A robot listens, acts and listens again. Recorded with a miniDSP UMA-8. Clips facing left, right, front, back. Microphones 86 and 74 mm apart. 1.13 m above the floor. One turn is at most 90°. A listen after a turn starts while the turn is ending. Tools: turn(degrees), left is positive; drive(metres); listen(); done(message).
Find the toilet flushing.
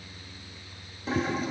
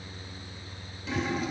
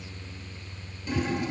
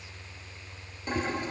turn(degrees=90)
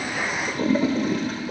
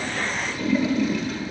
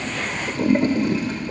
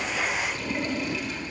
turn(degrees=45)
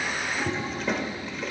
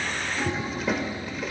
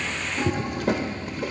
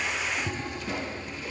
done("Facing the toilet flushing, 1 to 2 m away.")